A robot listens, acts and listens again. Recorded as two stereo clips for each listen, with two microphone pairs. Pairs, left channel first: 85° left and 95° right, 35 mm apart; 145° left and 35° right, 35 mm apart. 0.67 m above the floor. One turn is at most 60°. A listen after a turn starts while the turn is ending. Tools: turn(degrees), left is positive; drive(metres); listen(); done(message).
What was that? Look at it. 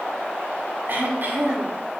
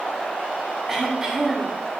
turn(degrees=-60)
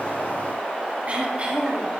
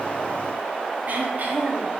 turn(degrees=-45)
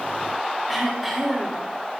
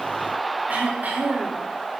done("Facing the throat clearing, 2 to 4 m away.")